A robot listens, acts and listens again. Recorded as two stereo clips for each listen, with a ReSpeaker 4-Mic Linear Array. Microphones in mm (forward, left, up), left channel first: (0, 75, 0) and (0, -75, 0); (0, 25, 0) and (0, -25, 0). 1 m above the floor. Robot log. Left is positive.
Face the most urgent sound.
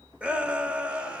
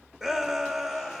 cmd yaw -30
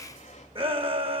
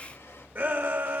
note: So it is at 140° right.
cmd yaw -140
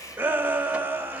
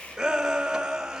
note: The shout is now 15° right.
cmd yaw -15
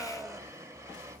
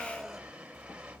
end: Facing the shout, 1 to 2 m away.